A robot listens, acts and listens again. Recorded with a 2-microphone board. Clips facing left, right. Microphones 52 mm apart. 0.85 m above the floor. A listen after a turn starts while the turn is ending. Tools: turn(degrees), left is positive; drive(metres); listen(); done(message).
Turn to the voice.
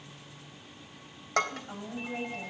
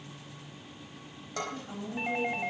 turn(degrees=20)
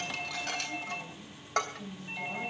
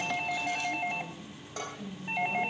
done("Facing the woman speaking.")